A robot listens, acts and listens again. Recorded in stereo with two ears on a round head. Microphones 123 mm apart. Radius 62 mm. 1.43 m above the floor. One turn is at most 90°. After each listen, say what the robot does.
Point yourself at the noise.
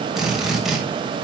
Turn 30° right.
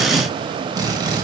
Turn 90° right.
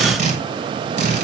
Turn 55° right.
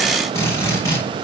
Turn 20° left.
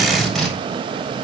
Facing the drill.